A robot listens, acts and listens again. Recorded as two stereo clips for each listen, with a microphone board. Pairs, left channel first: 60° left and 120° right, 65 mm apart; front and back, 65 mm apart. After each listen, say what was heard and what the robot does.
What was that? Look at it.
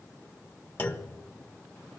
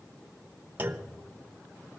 The clunk: 120° left. Turn 120° left.
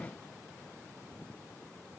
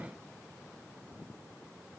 Facing where the clunk came from. I can't hear it now.